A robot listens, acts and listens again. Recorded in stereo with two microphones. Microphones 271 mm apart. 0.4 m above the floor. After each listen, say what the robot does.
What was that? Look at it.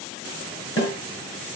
Turn 45° left.
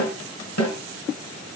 Turn 90° left.
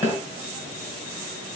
Facing the snare drum.